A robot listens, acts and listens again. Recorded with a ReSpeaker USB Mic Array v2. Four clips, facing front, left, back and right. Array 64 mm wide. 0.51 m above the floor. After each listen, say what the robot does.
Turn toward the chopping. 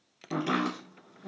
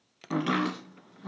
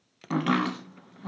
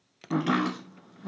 Turn 170° left.
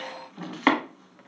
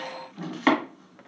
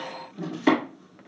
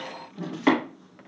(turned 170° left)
Turn 15° left.
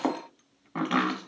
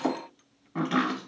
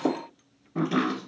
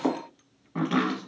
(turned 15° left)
Found it: chopping, straight ahead.